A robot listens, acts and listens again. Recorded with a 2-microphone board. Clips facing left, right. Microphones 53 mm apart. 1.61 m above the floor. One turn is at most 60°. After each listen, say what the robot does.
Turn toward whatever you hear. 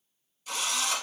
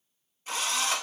Turn 35° right.
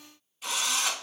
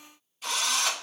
Found it: a drill, straight ahead.